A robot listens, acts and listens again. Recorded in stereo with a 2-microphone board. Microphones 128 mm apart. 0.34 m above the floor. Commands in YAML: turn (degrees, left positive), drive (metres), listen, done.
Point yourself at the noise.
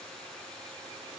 listen: true
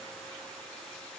listen: true
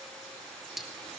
turn: 30
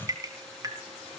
turn: -30
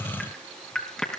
done: "Found it: dripping, straight ahead."